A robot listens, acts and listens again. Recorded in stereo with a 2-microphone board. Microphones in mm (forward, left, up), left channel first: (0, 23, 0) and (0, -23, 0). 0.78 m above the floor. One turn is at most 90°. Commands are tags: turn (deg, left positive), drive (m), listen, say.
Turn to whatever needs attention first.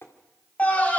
<turn deg="30"/>
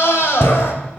<turn deg="90"/>
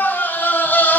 <turn deg="40"/>
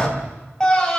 <turn deg="15"/>
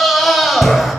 <say>Found it: a scream, straight ahead.</say>